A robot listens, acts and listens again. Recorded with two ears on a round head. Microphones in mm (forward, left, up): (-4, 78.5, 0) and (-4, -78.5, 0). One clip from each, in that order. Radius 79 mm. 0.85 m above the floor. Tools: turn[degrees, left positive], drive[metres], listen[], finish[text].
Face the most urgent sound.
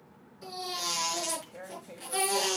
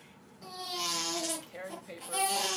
Action: turn[30]
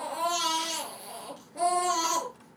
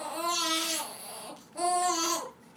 Thought: So it is at 20° right.
Action: turn[-20]
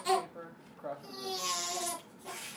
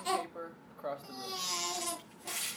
Action: finish[Found it: a baby crying, straight ahead.]